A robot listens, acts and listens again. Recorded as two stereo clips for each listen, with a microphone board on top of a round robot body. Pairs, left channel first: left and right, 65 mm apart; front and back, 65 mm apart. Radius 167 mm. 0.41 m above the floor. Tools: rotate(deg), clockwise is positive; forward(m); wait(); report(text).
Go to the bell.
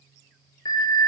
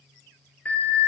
rotate(-70)
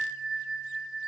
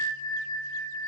forward(1.0)
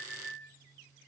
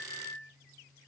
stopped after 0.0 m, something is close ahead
report("Blocked. The bell is further on, straight ahead.")